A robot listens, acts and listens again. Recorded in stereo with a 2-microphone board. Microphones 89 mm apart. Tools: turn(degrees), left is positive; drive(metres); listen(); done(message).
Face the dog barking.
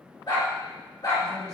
turn(degrees=45)
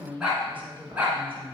turn(degrees=-15)
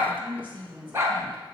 turn(degrees=-30)
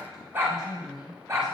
turn(degrees=-35)
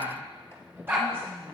turn(degrees=-10)
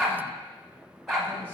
done("Found it: a dog barking, straight ahead, 1 to 2 m away.")